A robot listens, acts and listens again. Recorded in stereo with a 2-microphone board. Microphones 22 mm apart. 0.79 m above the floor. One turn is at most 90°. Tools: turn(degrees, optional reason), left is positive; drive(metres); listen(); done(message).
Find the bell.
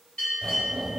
turn(degrees=65, reason="The bell: about 65° left or 115° left.")
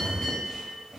turn(degrees=50, reason="So it is at 50° left.")
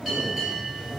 done("Found it: a bell, straight ahead, 1 to 2 m away.")